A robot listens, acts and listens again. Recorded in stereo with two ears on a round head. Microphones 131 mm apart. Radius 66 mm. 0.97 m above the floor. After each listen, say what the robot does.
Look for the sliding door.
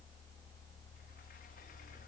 Keep listening.
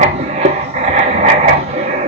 Keep listening.
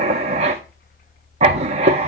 I can't make out a sliding door, only writing.